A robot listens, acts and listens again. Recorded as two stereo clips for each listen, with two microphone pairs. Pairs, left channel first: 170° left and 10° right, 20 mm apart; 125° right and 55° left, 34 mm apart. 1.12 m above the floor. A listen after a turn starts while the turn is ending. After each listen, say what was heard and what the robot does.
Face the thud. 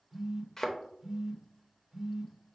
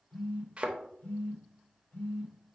The thud: 110° left. Turn 110° left.
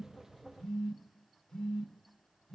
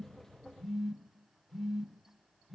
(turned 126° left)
Nothing new. It was at 15° right. Turn 15° right.
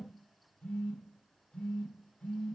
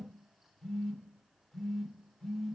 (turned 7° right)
Nothing new. It was at 10° right. Turn 10° right.
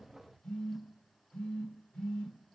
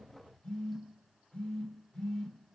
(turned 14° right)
Facing where the thud came from. I can't hear it now.